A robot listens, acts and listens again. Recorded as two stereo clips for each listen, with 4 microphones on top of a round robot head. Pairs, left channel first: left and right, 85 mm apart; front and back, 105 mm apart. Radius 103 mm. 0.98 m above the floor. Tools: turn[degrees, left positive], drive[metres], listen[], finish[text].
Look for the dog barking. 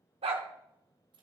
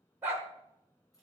Thought: The dog barking: 105° right.
Action: turn[-105]
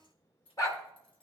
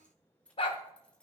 Thought: The dog barking is now 35° left.
Action: turn[35]
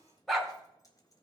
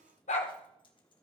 Action: finish[Facing the dog barking.]